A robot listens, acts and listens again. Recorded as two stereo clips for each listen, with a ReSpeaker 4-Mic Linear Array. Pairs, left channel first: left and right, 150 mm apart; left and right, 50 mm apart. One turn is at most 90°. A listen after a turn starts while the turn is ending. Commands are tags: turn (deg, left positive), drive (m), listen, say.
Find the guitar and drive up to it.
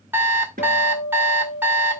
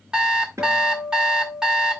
<turn deg="-75"/>
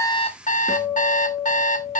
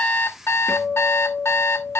<drive m="1.0"/>
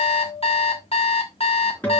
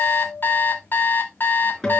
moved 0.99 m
<turn deg="10"/>
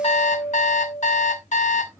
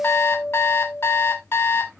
<drive m="1.0"/>
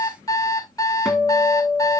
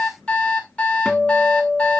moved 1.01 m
<drive m="1.0"/>
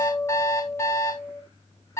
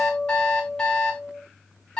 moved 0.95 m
<drive m="1.0"/>
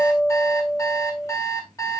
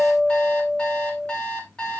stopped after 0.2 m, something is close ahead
<say>Arrived at the guitar, straight ahead.</say>